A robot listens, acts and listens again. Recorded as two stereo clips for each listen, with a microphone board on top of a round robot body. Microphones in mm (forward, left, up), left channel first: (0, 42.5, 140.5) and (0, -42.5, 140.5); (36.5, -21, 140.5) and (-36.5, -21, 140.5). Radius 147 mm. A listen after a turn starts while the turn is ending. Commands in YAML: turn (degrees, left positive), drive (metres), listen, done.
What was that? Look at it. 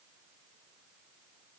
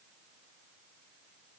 listen: true
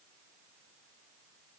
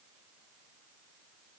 listen: true
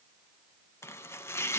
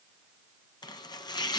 turn: 30
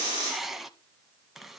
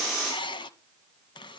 done: "Facing the chopping."